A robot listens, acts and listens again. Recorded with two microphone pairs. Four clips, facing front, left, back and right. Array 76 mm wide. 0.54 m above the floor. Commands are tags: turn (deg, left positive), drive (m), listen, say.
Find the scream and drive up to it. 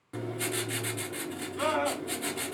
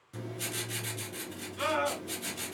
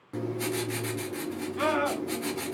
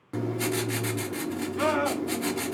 <turn deg="-125"/>
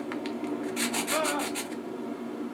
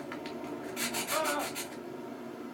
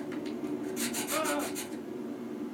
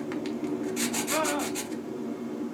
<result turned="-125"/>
<turn deg="-45"/>
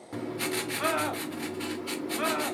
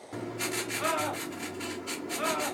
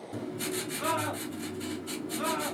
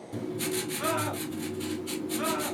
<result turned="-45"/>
<drive m="1.0"/>
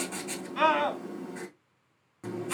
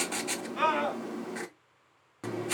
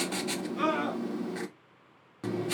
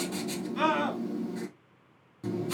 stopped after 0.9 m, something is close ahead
<turn deg="10"/>
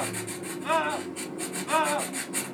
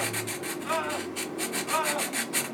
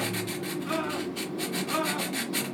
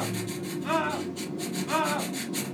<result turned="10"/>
<say>I am next to the scream.</say>